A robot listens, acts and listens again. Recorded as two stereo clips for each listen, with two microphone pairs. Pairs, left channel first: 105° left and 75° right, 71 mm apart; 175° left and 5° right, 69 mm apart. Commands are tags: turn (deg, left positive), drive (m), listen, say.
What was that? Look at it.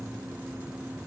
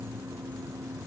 <listen/>
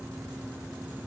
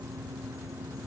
<listen/>
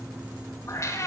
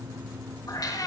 <turn deg="150"/>
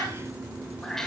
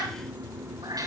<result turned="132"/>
<turn deg="20"/>
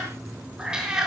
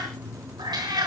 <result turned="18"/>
<say>Found it: a cat meowing, straight ahead.</say>